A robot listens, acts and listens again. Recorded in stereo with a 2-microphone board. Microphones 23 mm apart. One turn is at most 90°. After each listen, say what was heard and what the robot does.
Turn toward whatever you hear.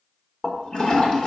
The toilet flushing: about 40° left or 140° left. Turn 40° left.
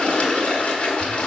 So it is at 100° left. Turn 90° left.
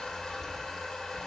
The toilet flushing is now 20° left. Turn 20° left.
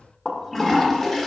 Facing the toilet flushing, 1 to 2 m away.